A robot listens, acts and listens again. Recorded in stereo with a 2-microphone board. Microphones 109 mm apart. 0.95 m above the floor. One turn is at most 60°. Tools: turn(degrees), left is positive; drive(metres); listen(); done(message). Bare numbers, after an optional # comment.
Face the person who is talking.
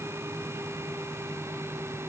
listen()
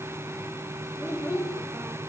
# The child speaking: about 25° left or 155° left.
turn(25)
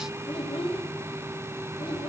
# So it is at 130° left.
turn(60)
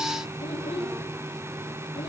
# The child speaking is now 70° left.
turn(60)
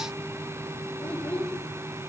# The child speaking is now 15° left.
turn(15)
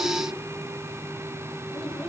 listen()
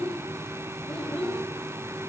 done("Found it: a child speaking, straight ahead.")